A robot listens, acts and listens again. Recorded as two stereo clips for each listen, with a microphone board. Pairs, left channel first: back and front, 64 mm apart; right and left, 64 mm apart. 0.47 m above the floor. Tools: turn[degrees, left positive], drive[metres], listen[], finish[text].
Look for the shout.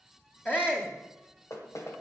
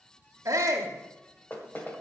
Thought: The shout: 120° left.
Action: turn[120]
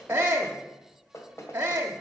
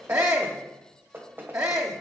Thought: The shout is now 55° left.
Action: turn[55]
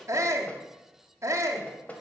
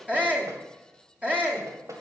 Thought: The shout is now 25° left.
Action: turn[25]
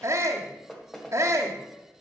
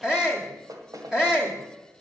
Thought: The shout is now 10° left.
Action: turn[10]
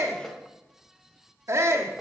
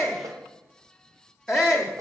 Action: finish[Found it: a shout, straight ahead.]